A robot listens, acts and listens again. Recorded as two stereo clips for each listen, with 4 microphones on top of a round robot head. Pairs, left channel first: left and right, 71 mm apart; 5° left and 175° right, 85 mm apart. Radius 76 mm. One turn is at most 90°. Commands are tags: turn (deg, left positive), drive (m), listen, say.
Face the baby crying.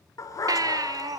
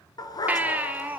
<turn deg="-90"/>
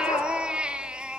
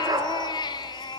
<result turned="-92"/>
<turn deg="-15"/>
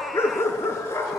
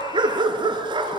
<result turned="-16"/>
<listen/>
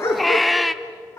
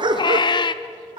<say>Facing the baby crying.</say>